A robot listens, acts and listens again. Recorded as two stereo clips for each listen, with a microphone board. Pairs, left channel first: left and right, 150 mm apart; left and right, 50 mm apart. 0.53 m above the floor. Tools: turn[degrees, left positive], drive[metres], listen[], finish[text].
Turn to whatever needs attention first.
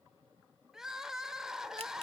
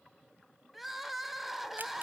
Action: turn[-30]
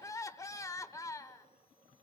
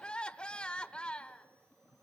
Thought: So it is at 25° left.
Action: turn[25]
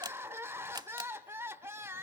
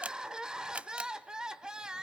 Thought: The crying is now 20° right.
Action: turn[-20]
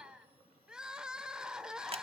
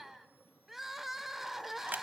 Action: finish[Found it: crying, straight ahead, 1 to 2 m away.]